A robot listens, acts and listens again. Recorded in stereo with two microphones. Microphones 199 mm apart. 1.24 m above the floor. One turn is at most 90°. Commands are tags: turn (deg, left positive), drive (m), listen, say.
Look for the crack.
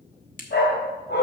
<turn deg="45"/>
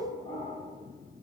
<listen/>
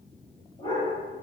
<say>I heard a crack, but can't make it out now. It was about straight ahead or 90° left.</say>